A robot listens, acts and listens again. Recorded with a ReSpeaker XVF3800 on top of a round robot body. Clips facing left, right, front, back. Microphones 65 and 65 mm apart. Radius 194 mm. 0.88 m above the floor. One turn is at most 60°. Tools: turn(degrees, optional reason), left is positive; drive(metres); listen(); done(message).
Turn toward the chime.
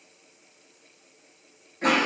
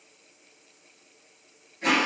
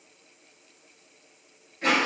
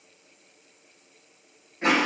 listen()
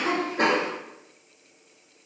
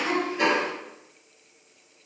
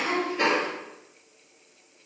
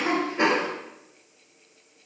listen()
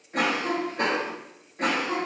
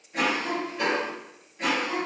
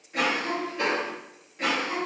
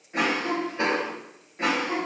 done("I can't make out a chime to turn to.")